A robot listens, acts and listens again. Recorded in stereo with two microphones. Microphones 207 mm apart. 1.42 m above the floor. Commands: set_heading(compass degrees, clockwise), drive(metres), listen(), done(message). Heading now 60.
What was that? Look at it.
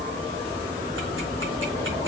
listen()
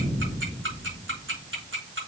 set_heading(135)
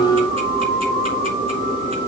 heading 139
listen()
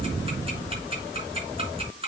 set_heading(164)
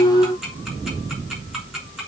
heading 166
listen()
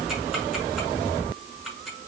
done("Facing the ticking, over 4 m away.")